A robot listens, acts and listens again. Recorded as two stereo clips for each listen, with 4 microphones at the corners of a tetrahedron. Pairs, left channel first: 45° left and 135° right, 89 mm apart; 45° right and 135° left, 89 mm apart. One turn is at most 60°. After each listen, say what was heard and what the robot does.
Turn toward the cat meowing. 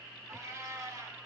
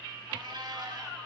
The cat meowing: 170° left. Turn 60° left.
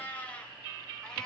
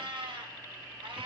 The cat meowing is now 125° left. Turn 60° left.
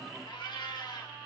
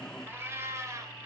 The cat meowing is now 80° left. Turn 60° left.
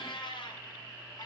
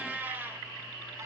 The cat meowing is now 65° left. Turn 60° left.
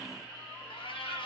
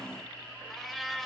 The cat meowing is now 40° left. Turn 40° left.
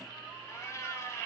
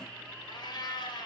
The cat meowing is now 10° right. Turn 10° right.
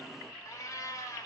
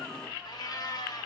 Facing the cat meowing, 1 to 2 m away.